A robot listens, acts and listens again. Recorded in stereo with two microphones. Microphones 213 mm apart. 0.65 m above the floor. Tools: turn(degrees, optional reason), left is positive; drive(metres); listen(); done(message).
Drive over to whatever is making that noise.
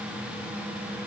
listen()
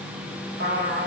turn(degrees=-75, reason="The trumpet: about 75° right or 105° right.")
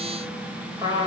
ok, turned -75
turn(degrees=-20, reason="So it is at 20° right.")
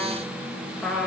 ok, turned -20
drive(metres=1.0)
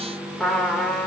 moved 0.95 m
drive(metres=1.0)
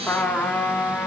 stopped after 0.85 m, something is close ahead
turn(degrees=10, reason="The trumpet is now 10° left.")
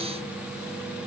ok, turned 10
listen()
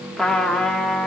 done("I am next to the trumpet.")